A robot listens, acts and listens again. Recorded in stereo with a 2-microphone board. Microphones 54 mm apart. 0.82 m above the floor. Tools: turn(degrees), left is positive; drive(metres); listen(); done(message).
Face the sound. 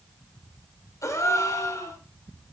turn(degrees=75)
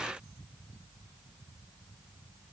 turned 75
listen()
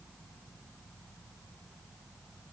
done("I heard a gasp, but can't make it out now. It was about straight ahead or 30° left.")